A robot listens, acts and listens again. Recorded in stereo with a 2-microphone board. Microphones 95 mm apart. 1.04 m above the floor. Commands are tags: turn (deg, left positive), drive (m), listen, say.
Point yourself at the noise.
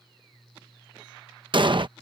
<turn deg="-55"/>
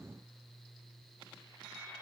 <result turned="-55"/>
<listen/>
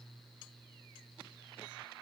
<say>I heard an explosion, but can't make it out now. It was about straight ahead or 70° right.</say>